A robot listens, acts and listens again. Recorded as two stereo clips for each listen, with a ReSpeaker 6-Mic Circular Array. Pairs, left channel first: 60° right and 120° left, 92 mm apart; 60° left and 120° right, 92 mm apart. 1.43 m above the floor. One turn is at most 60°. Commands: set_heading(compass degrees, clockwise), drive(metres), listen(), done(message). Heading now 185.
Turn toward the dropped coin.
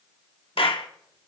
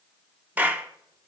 listen()
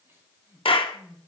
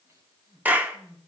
listen()
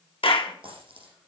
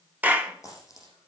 set_heading(125)
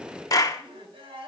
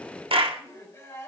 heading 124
set_heading(69)
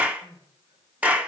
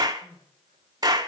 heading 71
done("Facing where the dropped coin came from. I can't hear it now.")